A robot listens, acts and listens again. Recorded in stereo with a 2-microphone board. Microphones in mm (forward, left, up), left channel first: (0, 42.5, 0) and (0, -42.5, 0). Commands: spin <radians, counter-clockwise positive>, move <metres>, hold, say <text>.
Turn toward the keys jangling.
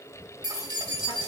spin -1.05
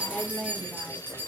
spin -0.44
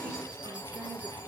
hold
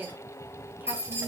spin -0.52
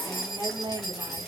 say Facing the keys jangling, 2 to 4 m away.